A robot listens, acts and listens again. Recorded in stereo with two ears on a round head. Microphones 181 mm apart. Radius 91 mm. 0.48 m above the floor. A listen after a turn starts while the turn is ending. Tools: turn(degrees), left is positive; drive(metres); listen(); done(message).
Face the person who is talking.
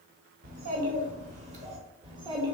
turn(degrees=-20)
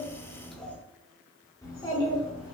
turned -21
turn(degrees=30)
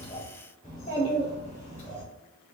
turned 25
turn(degrees=40)
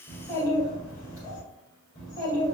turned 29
turn(degrees=15)
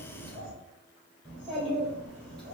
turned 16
done("Found it: a child speaking, straight ahead.")